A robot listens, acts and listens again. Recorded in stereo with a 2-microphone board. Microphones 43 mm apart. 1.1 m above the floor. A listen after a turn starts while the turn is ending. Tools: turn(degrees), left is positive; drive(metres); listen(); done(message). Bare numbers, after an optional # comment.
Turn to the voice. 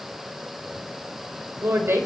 turn(-90)
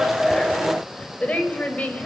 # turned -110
# So it is at 35° left.
turn(35)
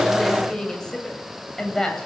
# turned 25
# The woman speaking is now 15° left.
turn(15)
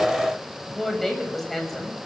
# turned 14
done("Found it: a woman speaking, straight ahead, over 4 m away.")